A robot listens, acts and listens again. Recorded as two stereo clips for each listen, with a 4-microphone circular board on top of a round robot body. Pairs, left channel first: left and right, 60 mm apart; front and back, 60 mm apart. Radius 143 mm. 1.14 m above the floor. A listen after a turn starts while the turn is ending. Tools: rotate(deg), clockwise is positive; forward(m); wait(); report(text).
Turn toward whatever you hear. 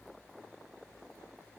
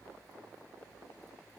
wait()
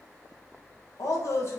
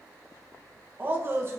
rotate(-135)
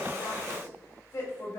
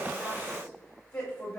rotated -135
rotate(-45)
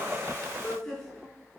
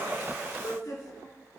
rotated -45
report("Facing the woman speaking, 2 to 4 m away.")